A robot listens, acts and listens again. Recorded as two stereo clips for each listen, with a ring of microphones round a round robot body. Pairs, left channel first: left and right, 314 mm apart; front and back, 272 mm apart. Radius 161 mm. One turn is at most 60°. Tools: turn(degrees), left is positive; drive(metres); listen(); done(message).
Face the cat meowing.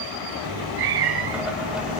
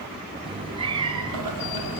turn(degrees=-60)
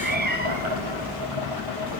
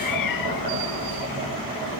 turn(degrees=-25)
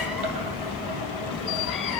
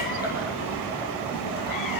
done("Facing the cat meowing.")